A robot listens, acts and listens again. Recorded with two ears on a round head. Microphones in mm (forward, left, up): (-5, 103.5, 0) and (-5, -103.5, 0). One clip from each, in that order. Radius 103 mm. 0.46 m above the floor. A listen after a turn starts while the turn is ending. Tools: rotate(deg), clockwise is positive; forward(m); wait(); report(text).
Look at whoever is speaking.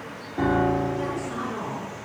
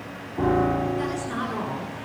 rotate(25)
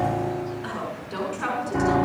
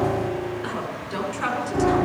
rotate(10)
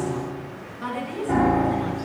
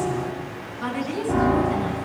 report("Found it: a woman speaking, straight ahead.")